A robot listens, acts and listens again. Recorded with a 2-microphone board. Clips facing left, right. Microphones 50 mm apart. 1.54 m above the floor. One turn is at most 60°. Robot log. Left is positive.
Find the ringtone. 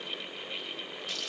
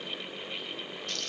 cmd idle
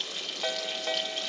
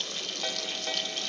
cmd yaw +30
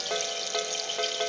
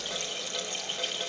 note: So it is at 140° left.
cmd yaw +60
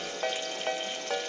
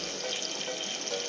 note: The ringtone is now 90° left.
cmd yaw +60
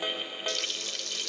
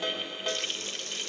note: The ringtone is now 15° left.
cmd yaw +15
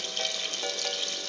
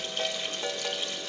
end: Found it: a ringtone, straight ahead, 1 to 2 m away.